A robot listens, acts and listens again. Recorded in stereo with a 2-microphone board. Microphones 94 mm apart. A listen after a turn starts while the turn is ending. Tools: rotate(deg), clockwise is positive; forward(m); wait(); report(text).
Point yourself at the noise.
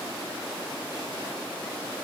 wait()
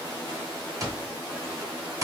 rotate(35)
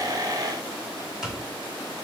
report("Found it: an alarm clock, straight ahead, 1 to 2 m away.")